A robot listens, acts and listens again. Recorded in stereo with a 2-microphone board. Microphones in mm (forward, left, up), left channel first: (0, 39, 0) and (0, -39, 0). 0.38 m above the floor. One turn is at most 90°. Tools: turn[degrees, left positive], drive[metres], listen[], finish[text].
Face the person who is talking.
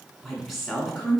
Action: turn[30]
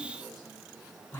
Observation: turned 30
Thought: So it is at 150° left.
Action: turn[90]
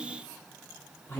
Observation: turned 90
Thought: The woman speaking is now 30° left.
Action: turn[30]
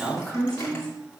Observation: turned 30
Thought: The woman speaking is now 10° left.
Action: turn[10]
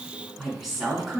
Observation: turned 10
Action: finish[Found it: a woman speaking, straight ahead, 2 to 4 m away.]